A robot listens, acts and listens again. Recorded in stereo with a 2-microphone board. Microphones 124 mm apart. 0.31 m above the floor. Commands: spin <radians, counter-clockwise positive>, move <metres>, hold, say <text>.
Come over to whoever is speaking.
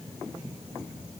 hold
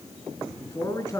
spin 0.44
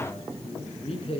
spin 2.18
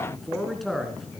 move 1.0
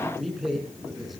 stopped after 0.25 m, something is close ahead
say Blocked. The man speaking is further on, straight ahead.